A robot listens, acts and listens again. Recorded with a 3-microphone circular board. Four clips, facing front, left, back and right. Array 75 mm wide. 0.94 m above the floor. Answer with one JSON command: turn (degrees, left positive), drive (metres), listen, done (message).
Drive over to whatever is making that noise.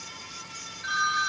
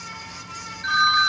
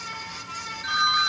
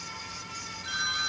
{"turn": 80}
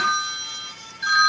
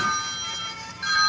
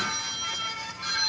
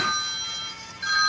{"drive": 1.0}
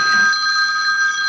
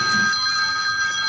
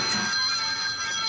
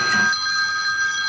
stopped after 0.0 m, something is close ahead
{"turn": -10}
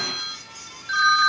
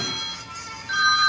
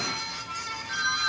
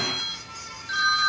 {"done": "Something is in my way. I am facing the phone ringing but have not reached it."}